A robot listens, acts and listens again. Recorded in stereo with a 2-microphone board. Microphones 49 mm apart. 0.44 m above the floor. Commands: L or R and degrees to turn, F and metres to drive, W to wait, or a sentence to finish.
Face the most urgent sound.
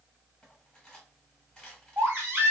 R60
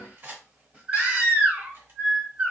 R30
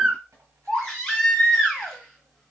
L10
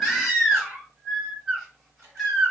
Found it: a baby crying, straight ahead.